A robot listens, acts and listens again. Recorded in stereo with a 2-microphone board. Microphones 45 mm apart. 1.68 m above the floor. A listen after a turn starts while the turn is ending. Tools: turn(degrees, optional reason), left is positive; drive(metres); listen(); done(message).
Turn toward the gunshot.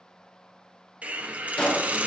turn(degrees=20, reason="The gunshot: about 20° left or 160° left.")
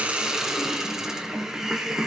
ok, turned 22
listen()
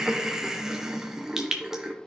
done("I heard a gunshot, but can't make it out now. It was about 5° right or 140° left.")